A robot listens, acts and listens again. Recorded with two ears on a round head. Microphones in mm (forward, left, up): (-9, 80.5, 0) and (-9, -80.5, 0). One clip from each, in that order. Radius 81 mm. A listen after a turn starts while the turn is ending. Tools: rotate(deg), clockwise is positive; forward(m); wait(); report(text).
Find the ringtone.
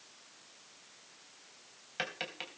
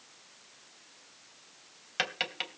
wait()
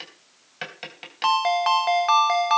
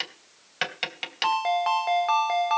rotate(-35)
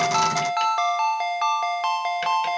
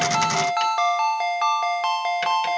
report("Found it: a ringtone, straight ahead, under 1 m away.")